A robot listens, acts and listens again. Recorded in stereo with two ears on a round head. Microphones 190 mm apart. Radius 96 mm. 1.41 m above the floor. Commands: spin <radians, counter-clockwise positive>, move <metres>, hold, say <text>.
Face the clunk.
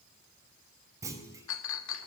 spin -0.52
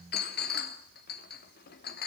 hold
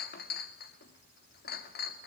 say I heard a clunk, but can't make it out now. It was about 15° left or 135° right.